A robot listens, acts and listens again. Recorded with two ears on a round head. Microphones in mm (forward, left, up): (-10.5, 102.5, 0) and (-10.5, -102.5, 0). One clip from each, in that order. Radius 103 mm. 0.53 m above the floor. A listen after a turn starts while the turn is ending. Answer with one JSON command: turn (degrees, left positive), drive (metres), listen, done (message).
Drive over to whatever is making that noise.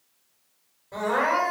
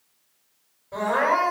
{"turn": 15}
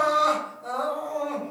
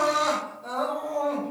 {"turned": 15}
{"turn": 150}
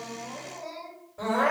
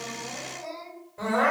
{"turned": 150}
{"turn": -30}
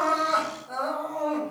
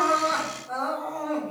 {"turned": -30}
{"drive": 1.0}
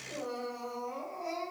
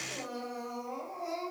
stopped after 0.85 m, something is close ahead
{"turn": -10}
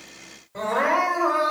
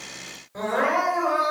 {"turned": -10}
{"done": "Arrived at the crying, straight ahead."}